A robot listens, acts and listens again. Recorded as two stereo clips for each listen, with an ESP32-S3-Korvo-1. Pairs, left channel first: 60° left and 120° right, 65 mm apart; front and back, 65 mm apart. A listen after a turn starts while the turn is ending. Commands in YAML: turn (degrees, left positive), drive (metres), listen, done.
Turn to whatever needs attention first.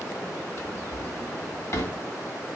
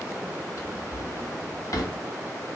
listen: true
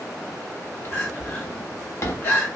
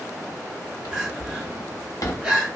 turn: 110
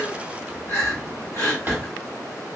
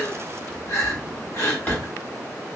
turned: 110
turn: 35
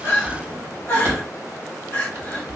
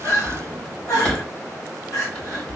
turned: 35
turn: 20
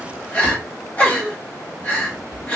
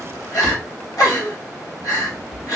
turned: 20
done: "Found it: crying, straight ahead."